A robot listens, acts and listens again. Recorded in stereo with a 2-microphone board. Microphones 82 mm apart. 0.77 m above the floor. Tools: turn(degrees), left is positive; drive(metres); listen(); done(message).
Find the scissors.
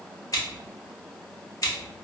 turn(degrees=45)
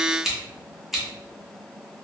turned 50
done("Facing the scissors, under 1 m away.")